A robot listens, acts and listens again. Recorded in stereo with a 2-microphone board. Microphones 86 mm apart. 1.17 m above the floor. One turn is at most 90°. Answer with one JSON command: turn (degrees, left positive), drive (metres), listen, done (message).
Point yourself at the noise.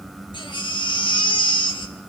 {"turn": 65}
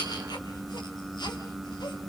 {"listen": true}
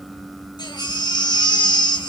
{"turn": 50}
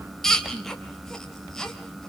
{"done": "Facing the baby crying, 2 to 4 m away."}